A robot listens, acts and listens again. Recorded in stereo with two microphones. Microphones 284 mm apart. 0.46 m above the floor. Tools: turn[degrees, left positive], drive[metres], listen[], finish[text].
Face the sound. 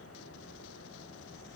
Action: listen[]
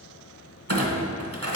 Thought: The clunk: about 60° right or 120° right.
Action: turn[-60]
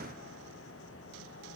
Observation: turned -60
Action: listen[]
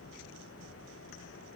Action: finish[I heard a clunk, but can't make it out now. It was about straight ahead or 60° right.]